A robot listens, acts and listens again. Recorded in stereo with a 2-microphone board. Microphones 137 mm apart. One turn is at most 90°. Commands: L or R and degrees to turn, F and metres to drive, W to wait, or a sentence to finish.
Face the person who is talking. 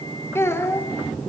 L20
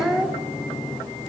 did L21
Facing the child speaking, 2 to 4 m away.